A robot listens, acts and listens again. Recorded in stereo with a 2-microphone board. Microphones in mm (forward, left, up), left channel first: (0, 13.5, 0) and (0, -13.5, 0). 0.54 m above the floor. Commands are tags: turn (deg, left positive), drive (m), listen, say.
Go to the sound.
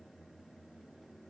<listen/>
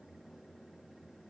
<listen/>
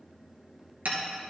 <turn deg="-90"/>
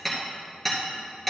<drive m="1.0"/>
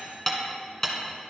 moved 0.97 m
<turn deg="15"/>
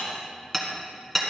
<drive m="1.0"/>
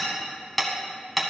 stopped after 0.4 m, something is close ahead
<say>Arrived at the hammering, straight ahead.</say>